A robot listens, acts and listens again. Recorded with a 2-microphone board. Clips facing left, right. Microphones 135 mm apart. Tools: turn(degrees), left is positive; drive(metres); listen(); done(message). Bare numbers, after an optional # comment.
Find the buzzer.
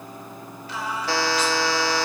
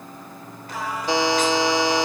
# The buzzer: about 15° right or 165° right.
turn(-15)
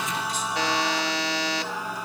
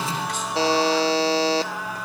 # So it is at 150° right.
turn(-150)
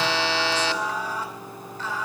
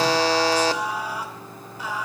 # The buzzer is now 45° right.
turn(-45)
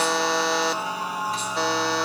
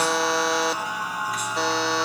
done("Facing the buzzer, under 1 m away.")